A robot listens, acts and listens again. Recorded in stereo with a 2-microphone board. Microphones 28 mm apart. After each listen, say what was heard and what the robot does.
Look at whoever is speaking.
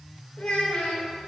The child speaking: about 65° left or 115° left. Turn 65° left.
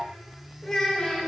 So it is at 15° left. Turn 15° left.
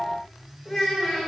Found it: a child speaking, straight ahead, 1 to 2 m away.